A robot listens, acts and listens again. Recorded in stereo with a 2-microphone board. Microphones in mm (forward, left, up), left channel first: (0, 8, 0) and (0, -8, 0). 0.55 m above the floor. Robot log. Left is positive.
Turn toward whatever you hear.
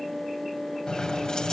note: The keys jangling: about 50° left or 130° left.
cmd yaw +50
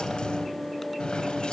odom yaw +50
note: So it is at 85° left.
cmd yaw +85
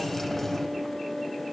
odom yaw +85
note: The keys jangling is now 15° left.
cmd yaw +15
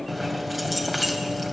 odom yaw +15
end: Found it: keys jangling, straight ahead, 2 to 4 m away.